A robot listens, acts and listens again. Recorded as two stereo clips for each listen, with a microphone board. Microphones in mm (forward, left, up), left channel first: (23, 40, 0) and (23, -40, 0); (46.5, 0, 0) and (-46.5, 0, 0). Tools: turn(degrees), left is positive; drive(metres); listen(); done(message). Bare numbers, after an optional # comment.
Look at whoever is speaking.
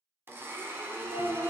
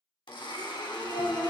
# The child speaking: 110° right.
turn(-110)
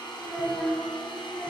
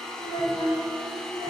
done("Found it: a child speaking, straight ahead, 2 to 4 m away.")